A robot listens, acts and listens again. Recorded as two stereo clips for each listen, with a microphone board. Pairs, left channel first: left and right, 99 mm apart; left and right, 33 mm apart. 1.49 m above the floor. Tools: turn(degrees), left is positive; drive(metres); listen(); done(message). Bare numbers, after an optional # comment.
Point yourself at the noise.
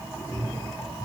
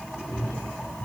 # The cat meowing: about 35° left or 145° left.
turn(35)
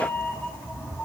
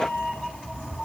# So it is at 20° left.
turn(20)
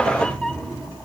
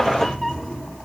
# The cat meowing is now 10° left.
turn(10)
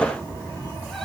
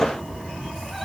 done("Found it: a cat meowing, straight ahead.")